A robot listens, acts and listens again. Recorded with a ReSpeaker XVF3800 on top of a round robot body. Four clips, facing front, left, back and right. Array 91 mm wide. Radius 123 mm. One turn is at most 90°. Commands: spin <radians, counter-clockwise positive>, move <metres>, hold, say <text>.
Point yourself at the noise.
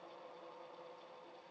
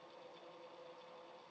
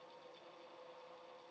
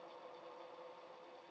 hold
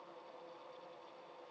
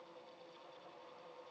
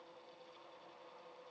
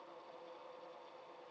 hold
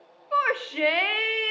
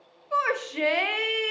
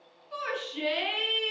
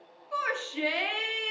spin 0.52
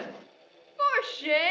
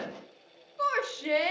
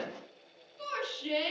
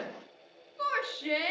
spin 0.26
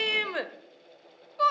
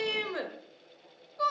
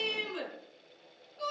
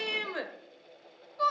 say Facing the shout, 1 to 2 m away.